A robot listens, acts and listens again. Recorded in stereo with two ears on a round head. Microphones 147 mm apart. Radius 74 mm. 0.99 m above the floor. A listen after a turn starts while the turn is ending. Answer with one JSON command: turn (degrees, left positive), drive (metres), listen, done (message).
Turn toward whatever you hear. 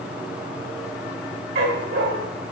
{"turn": -70}
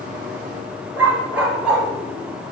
{"done": "Found it: a dog barking, straight ahead."}